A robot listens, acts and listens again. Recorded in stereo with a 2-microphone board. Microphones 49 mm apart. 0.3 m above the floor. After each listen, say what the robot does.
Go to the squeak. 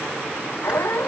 Turn 55° left.
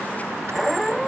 Drive 1.0 m forward.
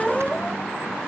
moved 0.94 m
Drive 1.0 m forward.
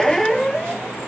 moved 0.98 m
Drive 1.0 m forward.
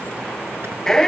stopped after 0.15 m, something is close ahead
Turn 10° left.
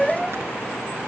I am next to the squeak.